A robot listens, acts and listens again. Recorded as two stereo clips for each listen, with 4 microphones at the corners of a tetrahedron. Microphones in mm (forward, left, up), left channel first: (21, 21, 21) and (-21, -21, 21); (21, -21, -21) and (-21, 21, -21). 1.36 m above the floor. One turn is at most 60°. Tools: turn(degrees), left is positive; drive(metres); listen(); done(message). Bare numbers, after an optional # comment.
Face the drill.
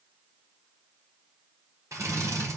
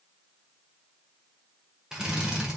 # The drill: 145° right.
turn(-60)
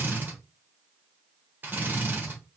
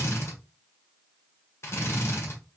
# The drill is now 80° right.
turn(-60)
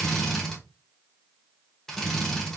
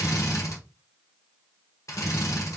# The drill is now 35° right.
turn(-35)
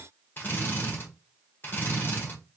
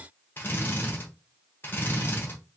done("Facing the drill.")